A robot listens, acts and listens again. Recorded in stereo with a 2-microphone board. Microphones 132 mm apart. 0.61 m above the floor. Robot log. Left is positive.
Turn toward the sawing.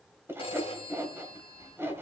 note: The sawing: about 20° right or 160° right.
cmd yaw -20
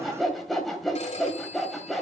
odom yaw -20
end: Facing the sawing, 1 to 2 m away.